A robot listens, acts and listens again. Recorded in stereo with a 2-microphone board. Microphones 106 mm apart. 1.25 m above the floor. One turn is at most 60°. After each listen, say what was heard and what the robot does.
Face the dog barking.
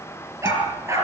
The dog barking: about 25° right or 155° right. Turn 25° right.
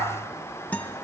Keep listening.
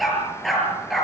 Found it: a dog barking, straight ahead, over 4 m away.